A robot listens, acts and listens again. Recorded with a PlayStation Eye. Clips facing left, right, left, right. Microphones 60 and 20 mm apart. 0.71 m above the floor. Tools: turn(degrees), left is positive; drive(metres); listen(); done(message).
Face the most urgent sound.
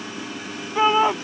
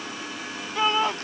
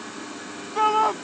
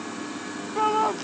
turn(degrees=20)
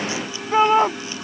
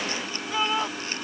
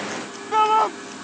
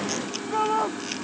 turn(degrees=140)
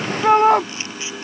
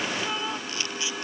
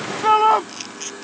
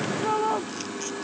turn(degrees=65)
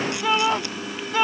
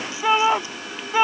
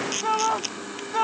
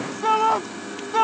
turn(degrees=-15)
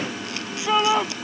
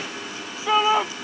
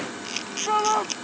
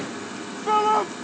done("Facing the shout.")